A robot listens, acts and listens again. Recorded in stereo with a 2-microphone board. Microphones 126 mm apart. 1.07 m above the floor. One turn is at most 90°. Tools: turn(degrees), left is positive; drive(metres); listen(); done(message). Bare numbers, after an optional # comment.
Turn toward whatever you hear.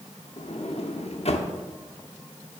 # The sliding door: about 60° left or 120° left.
turn(60)
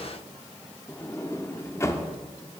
# So it is at 30° left.
turn(30)
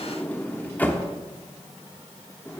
# The sliding door is now 15° left.
turn(15)
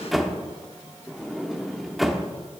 done("Facing the sliding door, under 1 m away.")